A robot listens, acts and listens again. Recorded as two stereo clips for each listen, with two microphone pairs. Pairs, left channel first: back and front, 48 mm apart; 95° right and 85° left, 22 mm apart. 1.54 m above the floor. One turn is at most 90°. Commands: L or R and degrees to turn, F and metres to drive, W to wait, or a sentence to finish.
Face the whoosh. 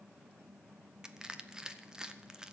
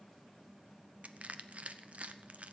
W
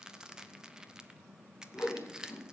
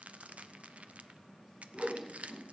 L90
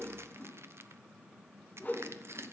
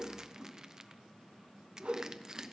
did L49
L90
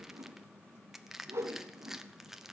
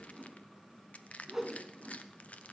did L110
L15
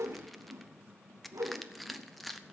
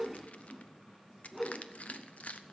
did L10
Found it: a whoosh, straight ahead, 2 to 4 m away.